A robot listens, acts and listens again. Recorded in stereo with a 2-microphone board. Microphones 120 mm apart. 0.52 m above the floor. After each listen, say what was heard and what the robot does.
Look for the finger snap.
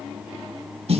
Keep listening.
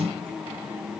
Keep listening.
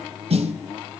I can't make out a finger snap to turn to.